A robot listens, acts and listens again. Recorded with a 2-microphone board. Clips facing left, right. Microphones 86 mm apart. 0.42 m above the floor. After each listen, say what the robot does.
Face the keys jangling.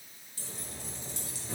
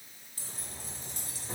Turn 50° right.
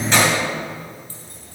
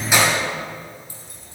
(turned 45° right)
Turn 10° right.
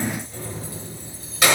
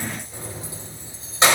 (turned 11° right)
Turn 30° right.
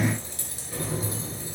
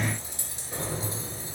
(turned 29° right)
Turn 30° right.
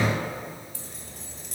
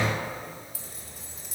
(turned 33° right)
Facing the keys jangling.